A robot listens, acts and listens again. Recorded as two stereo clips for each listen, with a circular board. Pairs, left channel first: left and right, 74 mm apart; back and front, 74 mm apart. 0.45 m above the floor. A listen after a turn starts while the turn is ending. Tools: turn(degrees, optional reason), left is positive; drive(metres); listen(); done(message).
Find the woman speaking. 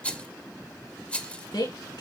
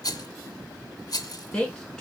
turn(degrees=100, reason="The woman speaking: 100° left.")
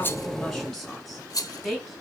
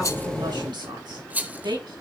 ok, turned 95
done("Facing the woman speaking.")